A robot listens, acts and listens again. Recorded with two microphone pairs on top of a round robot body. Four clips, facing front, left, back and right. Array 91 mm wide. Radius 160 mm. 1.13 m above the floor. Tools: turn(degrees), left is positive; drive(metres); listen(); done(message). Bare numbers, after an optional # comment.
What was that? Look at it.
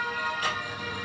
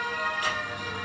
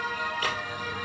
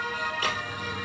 # The squeak: 155° right.
turn(-155)
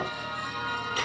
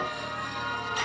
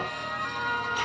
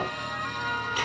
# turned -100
# The squeak is now 50° right.
turn(-50)
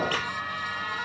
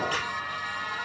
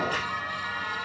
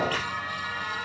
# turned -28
# The squeak is now 20° right.
turn(-20)
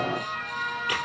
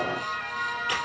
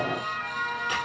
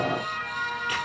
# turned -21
done("Found it: a squeak, straight ahead.")